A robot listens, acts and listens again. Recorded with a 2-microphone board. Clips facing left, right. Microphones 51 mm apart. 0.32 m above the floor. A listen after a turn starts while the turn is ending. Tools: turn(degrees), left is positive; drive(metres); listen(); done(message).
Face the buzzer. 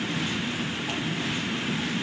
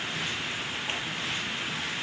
listen()
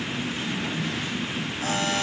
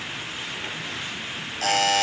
turn(degrees=-90)
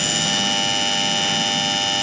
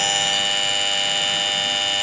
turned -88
done("Found it: a buzzer, straight ahead, 1 to 2 m away.")